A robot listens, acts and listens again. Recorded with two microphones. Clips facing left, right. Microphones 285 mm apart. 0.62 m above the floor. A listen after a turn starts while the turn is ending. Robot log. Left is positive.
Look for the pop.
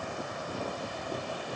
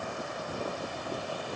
cmd idle
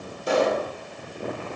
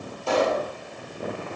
note: The pop: about 15° left or 165° left.
cmd yaw +15
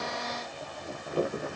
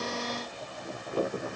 cmd idle
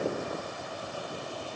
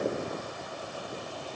end: I heard a pop, but can't make it out now. It was about straight ahead or 150° left.